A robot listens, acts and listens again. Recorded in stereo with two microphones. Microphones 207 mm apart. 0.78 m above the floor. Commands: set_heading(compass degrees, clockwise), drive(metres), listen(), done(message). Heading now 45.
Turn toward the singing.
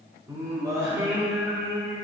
set_heading(75)
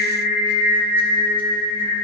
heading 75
set_heading(50)
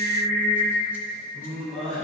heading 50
done("Found it: singing, straight ahead.")